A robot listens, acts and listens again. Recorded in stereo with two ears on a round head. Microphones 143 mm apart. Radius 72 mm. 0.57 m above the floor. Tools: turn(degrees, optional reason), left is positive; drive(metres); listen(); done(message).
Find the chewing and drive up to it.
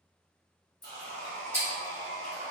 turn(degrees=30)
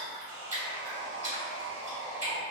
turn(degrees=-25, reason="So it is at 25° right.")
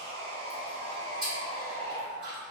drive(metres=1.0)
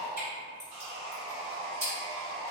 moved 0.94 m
turn(degrees=-20, reason="The chewing is now 20° right.")
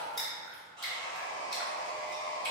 drive(metres=1.0)
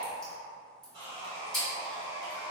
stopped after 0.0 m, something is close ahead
done("Arrived at the chewing, straight ahead.")